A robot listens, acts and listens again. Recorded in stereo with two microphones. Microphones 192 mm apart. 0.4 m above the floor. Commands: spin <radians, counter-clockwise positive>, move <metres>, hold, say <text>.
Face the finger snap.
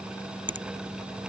spin -1.57
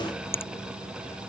spin 0.17
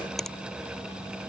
hold
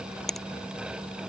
say Found it: a finger snap, straight ahead.